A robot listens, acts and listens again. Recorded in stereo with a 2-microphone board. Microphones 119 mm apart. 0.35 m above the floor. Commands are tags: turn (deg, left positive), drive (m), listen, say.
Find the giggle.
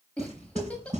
<turn deg="30"/>
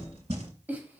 <turn deg="-15"/>
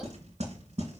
<listen/>
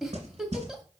<say>Found it: a giggle, straight ahead.</say>